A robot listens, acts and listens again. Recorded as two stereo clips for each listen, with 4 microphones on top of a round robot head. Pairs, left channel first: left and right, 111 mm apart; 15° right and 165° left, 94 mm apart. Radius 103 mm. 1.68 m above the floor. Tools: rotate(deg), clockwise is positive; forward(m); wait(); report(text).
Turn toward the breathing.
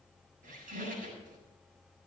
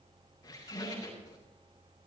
wait()
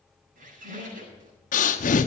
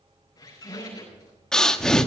rotate(-70)
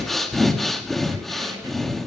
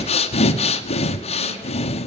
report("Facing the breathing, under 1 m away.")